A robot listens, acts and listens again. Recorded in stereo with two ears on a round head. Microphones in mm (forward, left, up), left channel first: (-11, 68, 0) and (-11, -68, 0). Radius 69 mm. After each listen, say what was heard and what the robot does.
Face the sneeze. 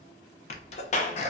The sneeze: about 45° left or 135° left. Turn 45° left.
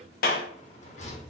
Keep listening.
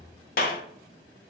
I heard a sneeze, but can't make it out now. It was about straight ahead or 90° left.